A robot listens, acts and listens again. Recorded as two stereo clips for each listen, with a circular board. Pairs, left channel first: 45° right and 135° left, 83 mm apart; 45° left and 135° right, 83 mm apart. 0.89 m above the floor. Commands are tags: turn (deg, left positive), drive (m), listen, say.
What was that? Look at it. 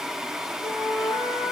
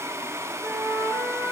<turn deg="-30"/>
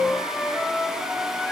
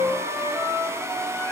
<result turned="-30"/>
<say>Found it: a flute, straight ahead, over 4 m away.</say>